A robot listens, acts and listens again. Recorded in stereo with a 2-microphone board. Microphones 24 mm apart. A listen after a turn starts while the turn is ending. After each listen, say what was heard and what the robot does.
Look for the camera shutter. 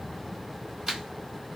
The camera shutter: about 20° right or 160° right. Turn 20° right.
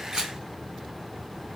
Keep listening.
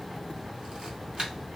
So it is at 135° right. Turn 135° right.
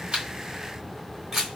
The camera shutter is now 20° right. Turn 20° right.
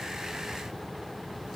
Keep listening.
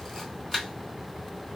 Found it: a camera shutter, straight ahead.